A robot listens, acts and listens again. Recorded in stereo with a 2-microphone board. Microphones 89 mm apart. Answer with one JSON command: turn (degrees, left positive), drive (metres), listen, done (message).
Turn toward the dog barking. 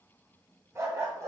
{"turn": -35}
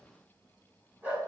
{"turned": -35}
{"turn": -20}
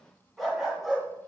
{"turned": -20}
{"done": "Facing the dog barking."}